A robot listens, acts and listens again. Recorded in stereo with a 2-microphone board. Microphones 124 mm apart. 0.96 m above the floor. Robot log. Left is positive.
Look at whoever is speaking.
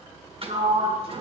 cmd idle
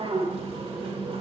cmd idle
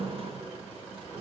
end: I can't make out anyone speaking to turn to.